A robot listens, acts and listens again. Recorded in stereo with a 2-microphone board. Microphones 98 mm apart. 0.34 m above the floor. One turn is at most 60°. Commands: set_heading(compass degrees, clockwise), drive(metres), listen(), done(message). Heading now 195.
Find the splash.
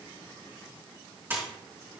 set_heading(220)
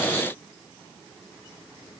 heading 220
listen()
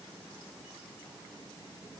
done("I heard a splash, but can't make it out now. It was about straight ahead or 130° right.")